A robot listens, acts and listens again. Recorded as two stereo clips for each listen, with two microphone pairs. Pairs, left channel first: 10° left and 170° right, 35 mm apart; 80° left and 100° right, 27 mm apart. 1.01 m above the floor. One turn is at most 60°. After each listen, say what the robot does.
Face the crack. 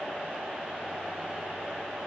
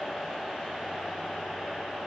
Keep listening.
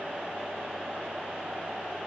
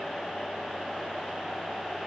Keep listening.
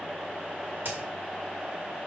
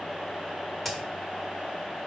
Turn 60° left.
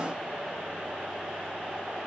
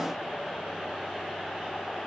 Turn 60° left.
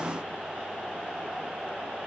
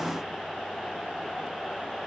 Turn 50° left.
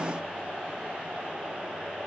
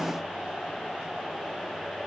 Facing where the crack came from. I can't hear it now.